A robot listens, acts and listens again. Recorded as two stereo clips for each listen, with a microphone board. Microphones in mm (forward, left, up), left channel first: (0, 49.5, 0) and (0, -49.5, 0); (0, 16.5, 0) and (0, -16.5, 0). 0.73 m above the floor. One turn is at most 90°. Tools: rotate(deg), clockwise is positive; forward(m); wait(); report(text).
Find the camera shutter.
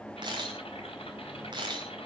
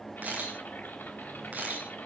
rotate(50)
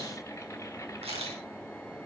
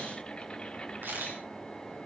rotate(85)
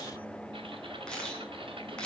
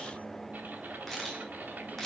rotate(-10)
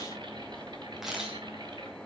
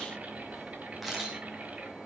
report("Found it: a camera shutter, straight ahead.")